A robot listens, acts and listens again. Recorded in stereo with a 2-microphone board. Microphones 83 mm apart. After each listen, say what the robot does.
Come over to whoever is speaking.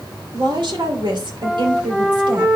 Turn 70° right.
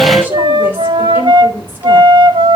Keep listening.
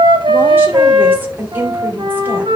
Turn 25° right.
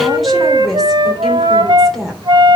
Drive 1.0 m forward.
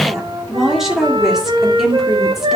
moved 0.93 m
Drive 1.0 m forward.
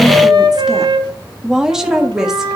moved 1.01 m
Turn 10° right.
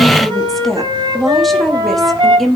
Drive 1.0 m forward.
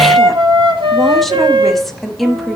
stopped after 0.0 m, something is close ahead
Arrived at the woman speaking, straight ahead.